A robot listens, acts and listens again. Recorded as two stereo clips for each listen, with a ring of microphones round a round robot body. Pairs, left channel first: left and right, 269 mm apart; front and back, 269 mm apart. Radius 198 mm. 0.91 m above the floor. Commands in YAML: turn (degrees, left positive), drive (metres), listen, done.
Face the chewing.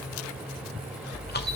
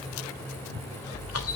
turn: 35
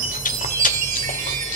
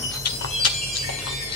turn: 30
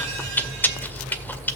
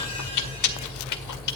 done: "Facing the chewing, 1 to 2 m away."